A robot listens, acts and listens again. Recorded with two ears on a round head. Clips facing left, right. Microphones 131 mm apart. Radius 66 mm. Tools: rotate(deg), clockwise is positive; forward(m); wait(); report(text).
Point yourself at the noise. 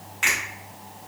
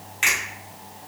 rotate(25)
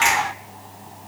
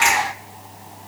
report("Found it: a finger snap, straight ahead.")